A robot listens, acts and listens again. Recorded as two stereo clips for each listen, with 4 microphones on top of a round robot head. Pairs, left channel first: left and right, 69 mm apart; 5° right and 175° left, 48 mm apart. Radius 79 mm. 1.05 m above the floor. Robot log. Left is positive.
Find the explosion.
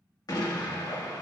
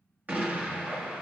note: The explosion: 120° left.
cmd yaw +120
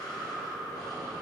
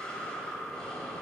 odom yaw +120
end: Facing where the explosion came from. I can't hear it now.